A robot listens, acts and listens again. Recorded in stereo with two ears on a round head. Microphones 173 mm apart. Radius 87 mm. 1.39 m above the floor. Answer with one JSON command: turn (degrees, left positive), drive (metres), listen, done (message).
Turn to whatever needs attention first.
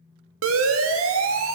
{"turn": -90}
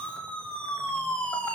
{"done": "Facing the siren, 2 to 4 m away."}